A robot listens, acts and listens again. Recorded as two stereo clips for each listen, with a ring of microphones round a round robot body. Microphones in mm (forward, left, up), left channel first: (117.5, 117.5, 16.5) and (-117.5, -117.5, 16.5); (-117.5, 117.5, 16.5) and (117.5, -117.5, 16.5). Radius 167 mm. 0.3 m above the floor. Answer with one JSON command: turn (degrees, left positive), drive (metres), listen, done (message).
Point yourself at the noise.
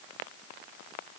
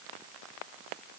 {"listen": true}
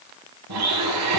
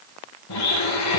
{"turn": 180}
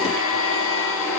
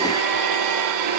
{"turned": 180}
{"turn": -10}
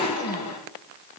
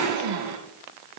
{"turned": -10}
{"done": "Facing the blender."}